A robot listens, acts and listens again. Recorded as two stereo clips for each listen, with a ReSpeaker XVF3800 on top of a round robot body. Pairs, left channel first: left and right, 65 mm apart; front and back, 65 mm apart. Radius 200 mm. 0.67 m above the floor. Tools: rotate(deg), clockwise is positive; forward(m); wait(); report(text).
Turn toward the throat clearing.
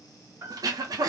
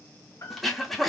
rotate(90)
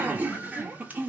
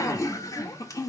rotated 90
rotate(25)
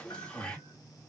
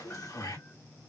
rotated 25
rotate(-15)
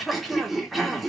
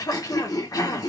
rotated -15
report("Found it: throat clearing, straight ahead.")